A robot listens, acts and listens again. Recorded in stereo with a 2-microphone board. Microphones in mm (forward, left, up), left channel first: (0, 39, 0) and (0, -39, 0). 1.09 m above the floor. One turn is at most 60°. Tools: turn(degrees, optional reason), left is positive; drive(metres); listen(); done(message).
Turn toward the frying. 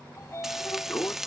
turn(degrees=-30)
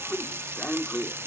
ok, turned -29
turn(degrees=-60, reason="So it is at 145° right.")
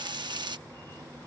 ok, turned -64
turn(degrees=-60, reason="The frying is now 85° right.")
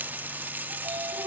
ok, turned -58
turn(degrees=-25, reason="The frying is now 25° right.")
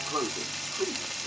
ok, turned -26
done("Found it: frying, straight ahead.")